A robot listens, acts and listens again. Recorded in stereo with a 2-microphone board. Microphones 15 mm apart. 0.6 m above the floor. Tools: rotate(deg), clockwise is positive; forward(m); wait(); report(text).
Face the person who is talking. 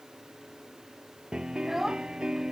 rotate(20)
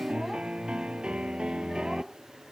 wait()
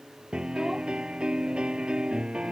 wait()
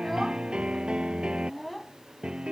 report("Facing the child speaking.")